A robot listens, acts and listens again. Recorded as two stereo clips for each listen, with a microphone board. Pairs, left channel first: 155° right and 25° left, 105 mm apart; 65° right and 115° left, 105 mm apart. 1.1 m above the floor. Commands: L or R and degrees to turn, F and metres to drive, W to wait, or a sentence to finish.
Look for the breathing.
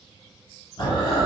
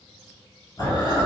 R120
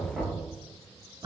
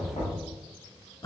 R25
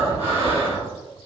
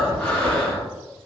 Found it: breathing, straight ahead.